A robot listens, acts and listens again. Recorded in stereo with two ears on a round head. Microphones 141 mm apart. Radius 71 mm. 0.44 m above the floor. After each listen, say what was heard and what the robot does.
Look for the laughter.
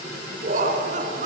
The laughter: about 50° right or 130° right. Turn 50° right.
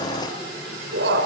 So it is at 80° right. Turn 80° right.
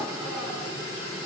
Keep listening.
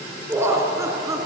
The laughter is now 20° right. Turn 20° right.
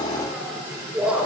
The laughter is now 10° right. Turn 10° right.
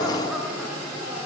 Found it: laughter, straight ahead, over 4 m away.